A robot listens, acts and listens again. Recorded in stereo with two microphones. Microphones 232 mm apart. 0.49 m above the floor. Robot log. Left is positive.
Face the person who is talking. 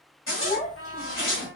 note: The child speaking: about 35° left or 145° left.
cmd yaw +35
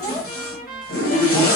note: So it is at 10° left.
cmd yaw +10
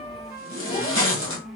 note: The child speaking is now 35° left.
cmd yaw +35
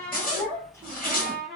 note: The child speaking is now 10° left.
cmd yaw +10
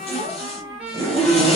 cmd idle
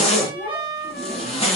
end: Facing the child speaking, 2 to 4 m away.